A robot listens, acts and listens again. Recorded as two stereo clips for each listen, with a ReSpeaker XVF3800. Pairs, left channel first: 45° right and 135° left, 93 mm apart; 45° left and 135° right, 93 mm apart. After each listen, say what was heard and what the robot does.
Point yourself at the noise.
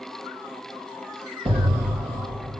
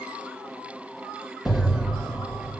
The explosion: 140° left. Turn 140° left.
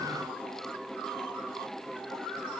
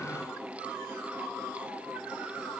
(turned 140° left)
I heard an explosion from this way, but can't make it out now.